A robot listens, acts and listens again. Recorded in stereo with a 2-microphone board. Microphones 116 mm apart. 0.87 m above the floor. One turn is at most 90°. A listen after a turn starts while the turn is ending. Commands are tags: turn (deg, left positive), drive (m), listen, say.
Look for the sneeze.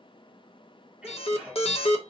<turn deg="-30"/>
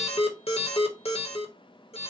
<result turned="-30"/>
<listen/>
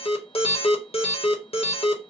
<say>I heard a sneeze, but can't make it out now. It was about 20° left or 140° right.</say>